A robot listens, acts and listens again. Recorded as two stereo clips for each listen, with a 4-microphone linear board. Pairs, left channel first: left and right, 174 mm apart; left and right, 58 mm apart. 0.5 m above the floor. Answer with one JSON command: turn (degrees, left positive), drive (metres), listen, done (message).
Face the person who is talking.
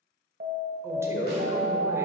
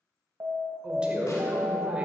{"turn": -15}
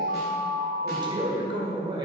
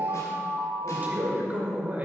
{"turn": -155}
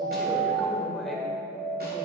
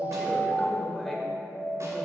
{"done": "Facing the man speaking, 1 to 2 m away."}